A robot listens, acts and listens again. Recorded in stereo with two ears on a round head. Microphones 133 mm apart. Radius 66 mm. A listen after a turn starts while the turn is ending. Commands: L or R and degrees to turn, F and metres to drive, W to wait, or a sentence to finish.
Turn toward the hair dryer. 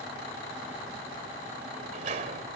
W
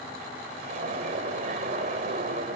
W
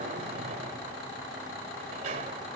I can't make out a hair dryer, only a sliding door.